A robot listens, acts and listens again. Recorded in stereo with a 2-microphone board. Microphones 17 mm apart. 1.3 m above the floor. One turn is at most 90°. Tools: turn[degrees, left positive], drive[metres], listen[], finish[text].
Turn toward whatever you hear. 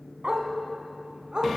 Thought: The dog barking: about 65° right or 115° right.
Action: turn[-65]
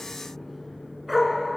Thought: So it is at 10° right.
Action: turn[-10]
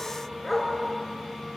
Action: finish[Found it: a dog barking, straight ahead, over 4 m away.]